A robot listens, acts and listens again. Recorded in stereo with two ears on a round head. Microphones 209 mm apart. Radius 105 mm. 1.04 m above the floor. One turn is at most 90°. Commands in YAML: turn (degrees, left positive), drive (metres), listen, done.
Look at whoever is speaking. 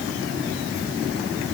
listen: true
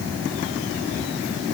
listen: true
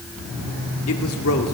turn: 70
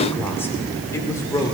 turn: 15
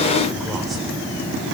listen: true
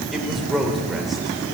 done: "Facing the man speaking, 2 to 4 m away."